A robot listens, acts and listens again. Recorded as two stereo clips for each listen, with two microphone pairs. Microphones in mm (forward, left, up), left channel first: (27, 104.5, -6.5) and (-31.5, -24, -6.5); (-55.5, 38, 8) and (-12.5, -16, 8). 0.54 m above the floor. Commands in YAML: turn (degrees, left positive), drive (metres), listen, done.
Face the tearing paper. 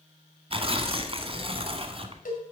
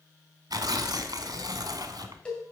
turn: -70
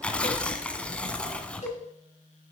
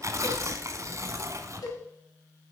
turn: -15
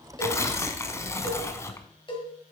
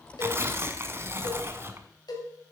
done: "Facing the tearing paper."